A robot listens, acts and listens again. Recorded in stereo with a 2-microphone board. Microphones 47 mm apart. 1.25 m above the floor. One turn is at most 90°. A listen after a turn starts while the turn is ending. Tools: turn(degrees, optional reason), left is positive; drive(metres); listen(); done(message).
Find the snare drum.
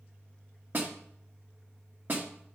turn(degrees=-45, reason="The snare drum: about 45° right or 135° right.")
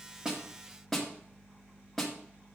done("Facing the snare drum, 1 to 2 m away.")